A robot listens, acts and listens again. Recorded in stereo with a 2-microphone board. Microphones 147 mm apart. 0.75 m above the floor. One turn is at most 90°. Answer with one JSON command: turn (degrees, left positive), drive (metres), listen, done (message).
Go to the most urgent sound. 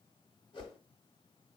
{"listen": true}
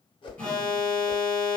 {"turn": 30}
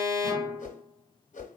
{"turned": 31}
{"turn": -25}
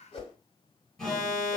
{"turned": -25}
{"drive": 1.0}
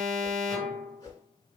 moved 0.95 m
{"drive": 1.0}
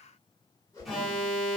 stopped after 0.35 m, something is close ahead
{"done": "I am next to the alarm."}